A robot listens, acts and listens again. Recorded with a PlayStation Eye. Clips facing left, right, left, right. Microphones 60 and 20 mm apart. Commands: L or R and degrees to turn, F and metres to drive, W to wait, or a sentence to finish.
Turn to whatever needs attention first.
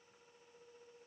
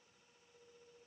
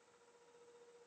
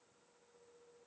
W
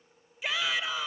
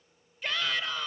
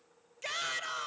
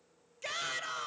L30
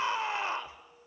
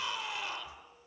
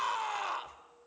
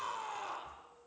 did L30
L145
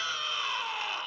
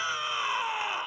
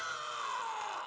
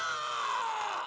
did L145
R20
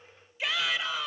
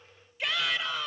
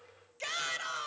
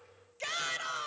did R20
Found it: a shout, straight ahead.